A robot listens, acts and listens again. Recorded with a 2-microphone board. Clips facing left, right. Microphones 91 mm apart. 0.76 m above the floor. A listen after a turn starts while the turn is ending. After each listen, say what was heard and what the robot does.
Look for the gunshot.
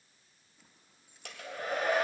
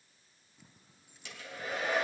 Keep listening.
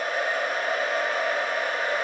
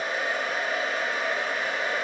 Keep listening.
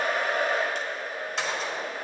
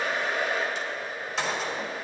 Turn 30° left.
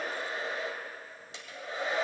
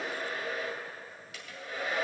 Keep listening.
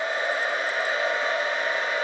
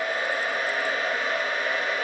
I heard a gunshot, but can't make it out now. It was about 30° right or 150° left.